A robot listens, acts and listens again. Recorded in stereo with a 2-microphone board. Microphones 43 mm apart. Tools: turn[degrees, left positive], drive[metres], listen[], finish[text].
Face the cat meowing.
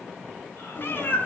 Thought: The cat meowing: about 50° left or 130° left.
Action: turn[50]
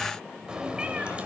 Thought: So it is at 30° right.
Action: turn[-30]
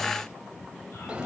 Thought: The cat meowing is now 25° right.
Action: turn[-25]
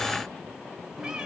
Thought: The cat meowing is now 15° right.
Action: turn[-15]
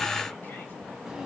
Thought: The cat meowing is now 10° right.
Action: turn[-10]
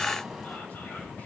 Action: finish[Found it: a cat meowing, straight ahead.]